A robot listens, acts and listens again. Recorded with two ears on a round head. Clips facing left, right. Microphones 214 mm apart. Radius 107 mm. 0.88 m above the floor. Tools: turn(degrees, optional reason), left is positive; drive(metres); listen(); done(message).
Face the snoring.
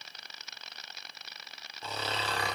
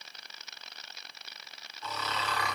turn(degrees=30, reason="The snoring: about 30° left or 150° left.")
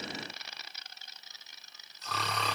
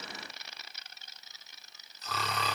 done("Found it: snoring, straight ahead, under 1 m away.")